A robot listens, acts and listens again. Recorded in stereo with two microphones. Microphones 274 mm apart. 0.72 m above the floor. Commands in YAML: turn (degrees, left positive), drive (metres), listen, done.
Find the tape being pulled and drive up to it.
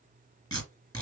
turn: 30
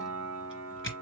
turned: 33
turn: 135
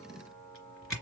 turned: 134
drive: 1.0
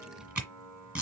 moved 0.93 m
drive: 1.0
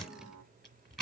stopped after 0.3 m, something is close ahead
done: "I am next to the tape being pulled."